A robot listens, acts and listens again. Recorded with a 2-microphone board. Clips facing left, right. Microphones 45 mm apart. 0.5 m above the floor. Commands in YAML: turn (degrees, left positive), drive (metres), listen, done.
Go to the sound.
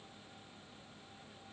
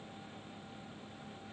listen: true
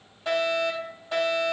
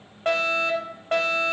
turn: -50
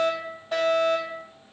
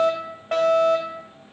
turn: -70
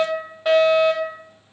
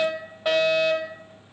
drive: 1.0
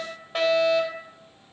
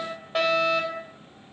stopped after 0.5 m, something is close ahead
done: "Something is in my way. I am facing the fire alarm but have not reached it."